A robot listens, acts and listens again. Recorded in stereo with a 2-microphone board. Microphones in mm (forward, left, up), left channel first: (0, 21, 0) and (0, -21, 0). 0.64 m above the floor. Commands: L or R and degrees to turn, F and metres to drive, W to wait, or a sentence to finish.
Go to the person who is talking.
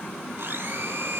W
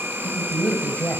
L30
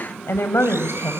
L120
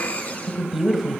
F1.0
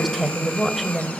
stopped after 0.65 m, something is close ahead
Something is in my way. I am facing the woman speaking but have not reached it.